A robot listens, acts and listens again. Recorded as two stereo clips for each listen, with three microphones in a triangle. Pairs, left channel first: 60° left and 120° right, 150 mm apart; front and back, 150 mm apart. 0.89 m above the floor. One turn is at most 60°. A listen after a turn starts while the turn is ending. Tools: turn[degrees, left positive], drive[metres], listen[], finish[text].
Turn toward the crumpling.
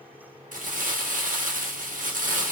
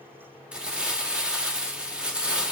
Thought: The crumpling: 100° right.
Action: turn[-60]
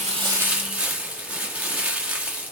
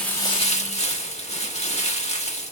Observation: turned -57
Thought: The crumpling is now 40° right.
Action: turn[-40]
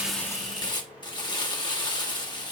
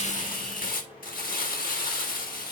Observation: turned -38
Action: finish[Facing the crumpling.]